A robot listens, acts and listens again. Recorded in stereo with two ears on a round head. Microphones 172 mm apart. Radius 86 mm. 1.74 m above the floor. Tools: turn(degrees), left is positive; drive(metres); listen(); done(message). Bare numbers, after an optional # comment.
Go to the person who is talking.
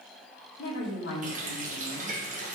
# The woman speaking: about 60° left or 120° left.
turn(60)
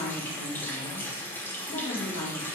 # So it is at 60° left.
turn(60)
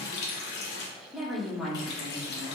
drive(1.0)
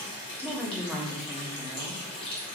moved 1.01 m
drive(1.0)
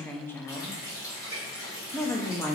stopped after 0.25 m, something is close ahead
# The woman speaking is now 10° left.
turn(10)
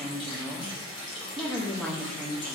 done("I am next to the woman speaking.")